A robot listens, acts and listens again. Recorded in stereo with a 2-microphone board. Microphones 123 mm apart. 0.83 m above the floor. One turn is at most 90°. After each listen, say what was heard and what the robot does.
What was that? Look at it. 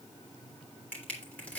Turn 30° left.
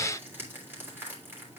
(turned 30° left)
So it is at 20° right. Turn 20° right.
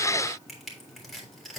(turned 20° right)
Found it: crushing, straight ahead, 2 to 4 m away.